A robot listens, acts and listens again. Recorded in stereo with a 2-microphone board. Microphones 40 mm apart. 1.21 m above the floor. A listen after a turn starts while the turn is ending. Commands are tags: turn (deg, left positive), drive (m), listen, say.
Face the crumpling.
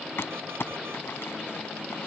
<turn deg="75"/>
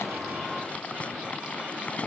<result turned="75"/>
<turn deg="30"/>
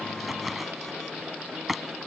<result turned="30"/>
<say>Found it: crumpling, straight ahead.</say>